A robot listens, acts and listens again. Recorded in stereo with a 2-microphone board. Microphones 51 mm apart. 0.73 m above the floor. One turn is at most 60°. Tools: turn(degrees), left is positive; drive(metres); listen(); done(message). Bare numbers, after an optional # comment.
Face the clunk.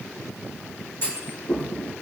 # The clunk: about 45° left or 135° left.
turn(45)
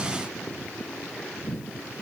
listen()
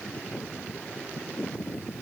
done("I heard a clunk, but can't make it out now. It was about straight ahead or 90° left.")